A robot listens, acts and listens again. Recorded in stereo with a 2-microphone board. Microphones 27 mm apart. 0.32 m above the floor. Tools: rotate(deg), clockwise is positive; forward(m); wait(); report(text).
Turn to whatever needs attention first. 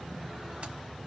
wait()
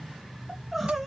rotate(30)
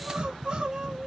rotate(140)
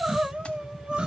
rotate(40)
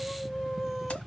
report("Found it: crying, straight ahead.")